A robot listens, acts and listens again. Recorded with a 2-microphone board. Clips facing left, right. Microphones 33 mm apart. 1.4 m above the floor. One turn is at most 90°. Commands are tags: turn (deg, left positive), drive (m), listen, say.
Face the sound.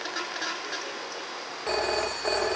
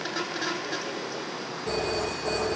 <turn deg="50"/>
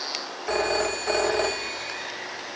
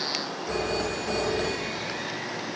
<turn deg="80"/>
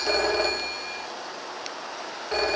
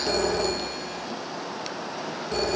<turn deg="30"/>
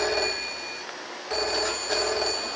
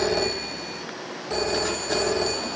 <say>Found it: a phone ringing, straight ahead.</say>